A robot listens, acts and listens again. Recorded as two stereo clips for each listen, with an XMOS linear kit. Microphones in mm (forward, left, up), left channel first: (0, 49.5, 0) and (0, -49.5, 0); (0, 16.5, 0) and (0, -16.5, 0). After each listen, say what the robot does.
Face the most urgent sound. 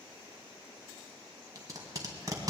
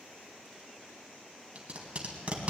Keep listening.
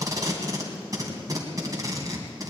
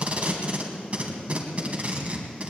Keep listening.
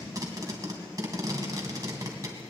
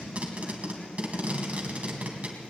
I can't make out anything urgent to turn to.